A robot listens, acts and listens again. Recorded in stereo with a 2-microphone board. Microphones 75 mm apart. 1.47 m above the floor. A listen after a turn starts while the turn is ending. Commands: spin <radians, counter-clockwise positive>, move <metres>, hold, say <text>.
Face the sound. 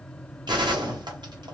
spin -1.31
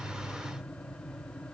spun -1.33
hold
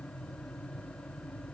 say I heard a gunshot, but can't make it out now. It was about straight ahead or 30° right.